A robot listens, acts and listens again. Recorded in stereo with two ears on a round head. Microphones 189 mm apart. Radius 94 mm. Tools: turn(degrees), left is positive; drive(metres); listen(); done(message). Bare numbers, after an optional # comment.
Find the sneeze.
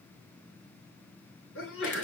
# The sneeze: about 70° left or 110° left.
turn(70)
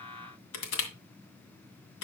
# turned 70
listen()
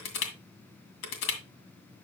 done("I heard a sneeze, but can't make it out now. It was about straight ahead or 40° left.")